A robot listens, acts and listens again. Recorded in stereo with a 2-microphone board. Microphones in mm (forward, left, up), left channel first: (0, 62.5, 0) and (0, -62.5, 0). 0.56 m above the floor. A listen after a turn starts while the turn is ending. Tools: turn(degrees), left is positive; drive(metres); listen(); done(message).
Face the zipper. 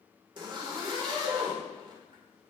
turn(degrees=-40)
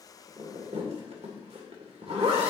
turn(degrees=-95)
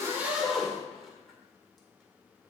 done("Facing the zipper.")